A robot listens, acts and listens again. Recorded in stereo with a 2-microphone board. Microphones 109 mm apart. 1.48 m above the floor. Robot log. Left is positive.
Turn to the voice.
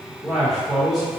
cmd yaw +30
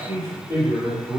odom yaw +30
note: So it is at 30° right.
cmd yaw -30
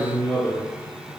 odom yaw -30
end: Facing the man speaking, 1 to 2 m away.